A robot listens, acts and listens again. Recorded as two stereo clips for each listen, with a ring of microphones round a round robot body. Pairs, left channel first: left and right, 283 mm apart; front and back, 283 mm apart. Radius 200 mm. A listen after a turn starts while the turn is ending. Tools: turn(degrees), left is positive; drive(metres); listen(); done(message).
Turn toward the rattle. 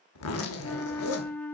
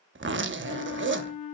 listen()
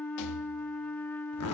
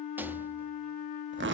turn(degrees=95)
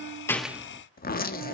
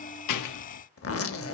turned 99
listen()
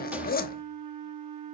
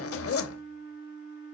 listen()
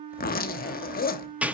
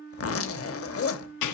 done("Found it: a rattle, straight ahead, under 1 m away.")